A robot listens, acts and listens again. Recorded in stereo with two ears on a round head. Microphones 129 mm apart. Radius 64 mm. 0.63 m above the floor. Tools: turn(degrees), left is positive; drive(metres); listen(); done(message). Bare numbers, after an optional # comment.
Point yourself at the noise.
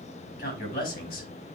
# The man speaking: about 70° left or 110° left.
turn(70)
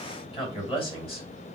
# So it is at 40° left.
turn(40)
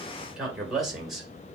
done("Found it: a man speaking, straight ahead, 2 to 4 m away.")